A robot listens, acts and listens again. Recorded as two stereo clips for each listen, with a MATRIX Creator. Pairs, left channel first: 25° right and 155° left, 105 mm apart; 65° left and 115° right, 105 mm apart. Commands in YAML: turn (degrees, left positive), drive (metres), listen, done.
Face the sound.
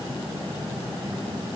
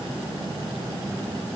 listen: true
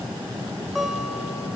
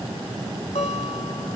turn: 70
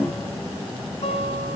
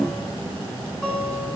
turn: -15
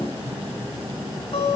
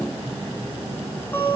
done: "Found it: a guitar, straight ahead."